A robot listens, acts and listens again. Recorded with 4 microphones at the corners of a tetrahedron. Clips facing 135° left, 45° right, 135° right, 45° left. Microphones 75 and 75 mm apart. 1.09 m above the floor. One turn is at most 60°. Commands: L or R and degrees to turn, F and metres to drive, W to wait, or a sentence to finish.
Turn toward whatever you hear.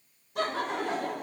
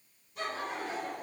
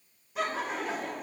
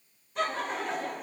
L60
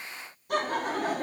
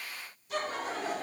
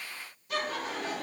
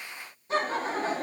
L60
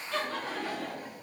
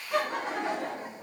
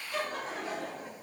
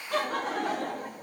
L20
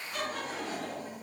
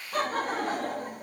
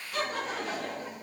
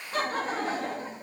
R15
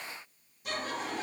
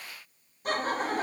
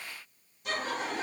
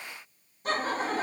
Facing the laughter, 1 to 2 m away.